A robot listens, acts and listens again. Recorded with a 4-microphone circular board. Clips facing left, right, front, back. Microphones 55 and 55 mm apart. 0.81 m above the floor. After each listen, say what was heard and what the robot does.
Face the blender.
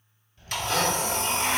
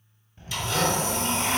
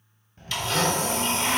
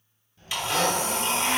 The blender: 110° left. Turn 110° left.
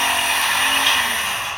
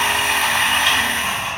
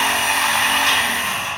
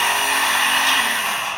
Facing the blender.